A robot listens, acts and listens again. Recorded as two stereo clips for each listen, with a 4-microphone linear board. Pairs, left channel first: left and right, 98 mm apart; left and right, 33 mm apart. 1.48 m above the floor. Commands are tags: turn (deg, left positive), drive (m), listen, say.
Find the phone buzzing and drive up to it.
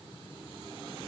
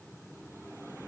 <listen/>
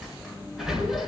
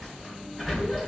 <listen/>
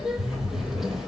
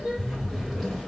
<turn deg="-35"/>
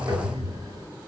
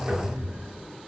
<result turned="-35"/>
<turn deg="-110"/>
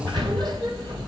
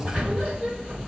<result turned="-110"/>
<turn deg="-15"/>
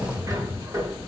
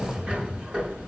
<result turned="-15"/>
<drive m="1.0"/>
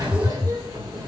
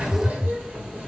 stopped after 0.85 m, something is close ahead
<say>Something is in my way. I am facing the phone buzzing but have not reached it.</say>